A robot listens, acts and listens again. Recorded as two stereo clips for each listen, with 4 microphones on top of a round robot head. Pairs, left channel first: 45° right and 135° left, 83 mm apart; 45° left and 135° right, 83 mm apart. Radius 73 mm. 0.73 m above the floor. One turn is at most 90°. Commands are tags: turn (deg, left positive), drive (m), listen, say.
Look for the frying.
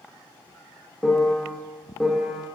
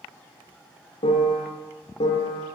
<listen/>
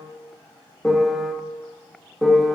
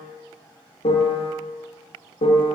<listen/>
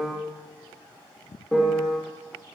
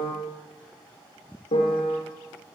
<say>I can't make out frying, only a piano.</say>